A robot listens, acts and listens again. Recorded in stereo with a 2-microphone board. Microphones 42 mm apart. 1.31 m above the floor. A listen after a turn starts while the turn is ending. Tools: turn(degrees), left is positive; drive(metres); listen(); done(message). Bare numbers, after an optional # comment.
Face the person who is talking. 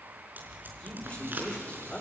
# The man speaking: about 25° left or 155° left.
turn(25)
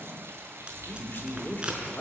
# So it is at 130° left.
turn(130)
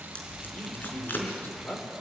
# The man speaking is now 50° left.
turn(50)
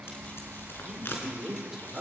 # The man speaking is now 10° right.
turn(-10)
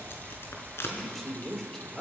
done("Facing the man speaking, 2 to 4 m away.")